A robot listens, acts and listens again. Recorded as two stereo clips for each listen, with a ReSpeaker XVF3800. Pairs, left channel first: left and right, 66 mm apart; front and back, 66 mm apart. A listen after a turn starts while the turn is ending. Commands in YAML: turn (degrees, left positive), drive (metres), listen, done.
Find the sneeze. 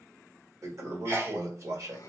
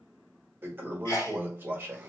turn: -40
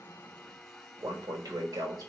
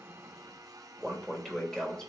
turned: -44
done: "I heard a sneeze from this way, but can't make it out now."